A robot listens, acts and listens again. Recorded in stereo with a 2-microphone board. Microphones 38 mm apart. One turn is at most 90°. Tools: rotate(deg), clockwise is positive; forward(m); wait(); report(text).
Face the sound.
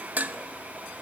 rotate(45)
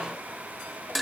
report("Found it: dishes clattering, straight ahead, under 1 m away.")